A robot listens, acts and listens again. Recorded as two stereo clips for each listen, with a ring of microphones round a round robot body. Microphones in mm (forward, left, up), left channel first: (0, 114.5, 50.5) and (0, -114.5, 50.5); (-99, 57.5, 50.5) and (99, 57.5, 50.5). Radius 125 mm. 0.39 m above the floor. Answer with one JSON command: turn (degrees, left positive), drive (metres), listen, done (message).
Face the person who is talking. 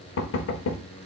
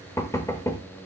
{"listen": true}
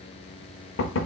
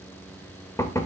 {"listen": true}
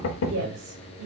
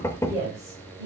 {"turn": -75}
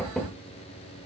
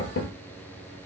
{"listen": true}
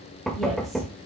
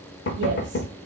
{"listen": true}
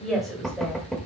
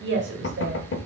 {"done": "Found it: a woman speaking, straight ahead."}